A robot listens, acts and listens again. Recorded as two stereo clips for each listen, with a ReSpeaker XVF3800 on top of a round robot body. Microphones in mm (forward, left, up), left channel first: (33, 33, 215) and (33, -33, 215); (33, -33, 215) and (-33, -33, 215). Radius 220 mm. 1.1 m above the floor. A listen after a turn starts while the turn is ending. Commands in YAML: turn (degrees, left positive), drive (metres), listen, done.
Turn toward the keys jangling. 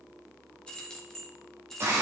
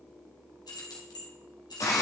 done: "Facing the keys jangling, 1 to 2 m away."